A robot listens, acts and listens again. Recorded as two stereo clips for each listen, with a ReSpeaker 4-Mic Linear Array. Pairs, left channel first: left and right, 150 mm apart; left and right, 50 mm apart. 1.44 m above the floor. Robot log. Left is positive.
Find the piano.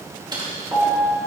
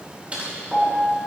note: The piano: about 25° right or 155° right.
cmd yaw -25
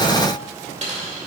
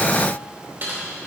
cmd idle
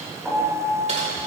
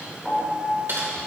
note: So it is at 10° right.
cmd yaw -10
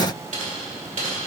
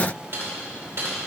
cmd idle
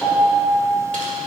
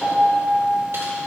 end: Found it: a piano, straight ahead, 2 to 4 m away.